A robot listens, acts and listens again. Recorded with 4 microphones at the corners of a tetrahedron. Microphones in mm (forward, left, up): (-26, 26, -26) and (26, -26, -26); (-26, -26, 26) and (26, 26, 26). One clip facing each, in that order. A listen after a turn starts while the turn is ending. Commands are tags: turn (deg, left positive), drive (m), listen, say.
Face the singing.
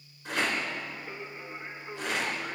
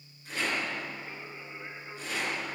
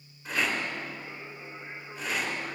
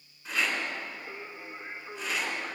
<turn deg="85"/>
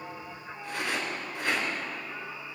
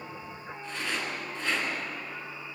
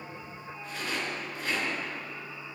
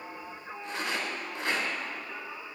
<turn deg="45"/>
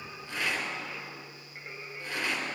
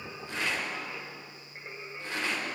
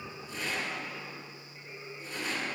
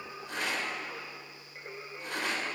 <turn deg="20"/>
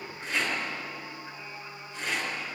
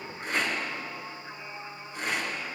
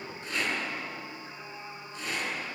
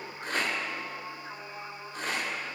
<say>Found it: singing, straight ahead, 2 to 4 m away.</say>